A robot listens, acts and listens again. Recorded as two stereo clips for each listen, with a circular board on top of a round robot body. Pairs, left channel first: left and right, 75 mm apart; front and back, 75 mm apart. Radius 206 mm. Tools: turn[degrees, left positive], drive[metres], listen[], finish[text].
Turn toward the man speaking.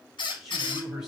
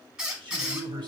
Thought: The man speaking: 170° right.
Action: turn[-170]
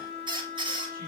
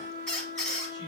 Action: listen[]
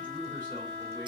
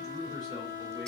Action: listen[]
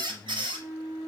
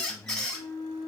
Thought: The man speaking is now 30° left.
Action: turn[30]
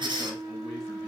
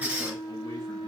Action: listen[]
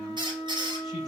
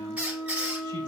Action: listen[]
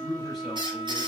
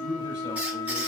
Action: finish[Facing the man speaking, over 4 m away.]